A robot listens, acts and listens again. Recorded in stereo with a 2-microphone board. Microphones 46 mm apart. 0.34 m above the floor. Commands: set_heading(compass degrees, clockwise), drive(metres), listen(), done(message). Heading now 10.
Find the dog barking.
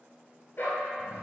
set_heading(315)
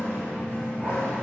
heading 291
listen()
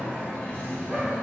listen()
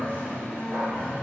done("I heard a dog barking, but can't make it out now. It was about 25° right or 45° left.")